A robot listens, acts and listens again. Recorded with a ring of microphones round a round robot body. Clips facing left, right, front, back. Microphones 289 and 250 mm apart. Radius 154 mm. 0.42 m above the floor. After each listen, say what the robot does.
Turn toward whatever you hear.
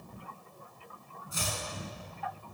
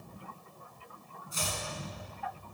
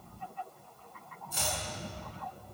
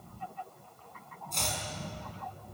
Turn 85° left.
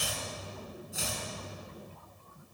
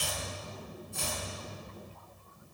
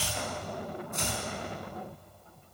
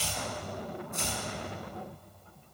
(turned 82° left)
Found it: chopping, straight ahead.